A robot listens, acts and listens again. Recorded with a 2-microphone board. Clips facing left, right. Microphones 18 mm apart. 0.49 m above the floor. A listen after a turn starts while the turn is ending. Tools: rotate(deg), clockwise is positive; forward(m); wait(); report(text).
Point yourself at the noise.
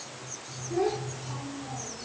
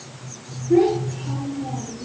rotate(40)
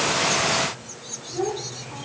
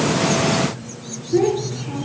rotate(100)
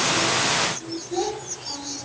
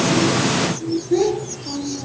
rotate(25)
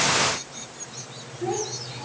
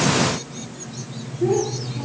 report("Found it: a child speaking, straight ahead.")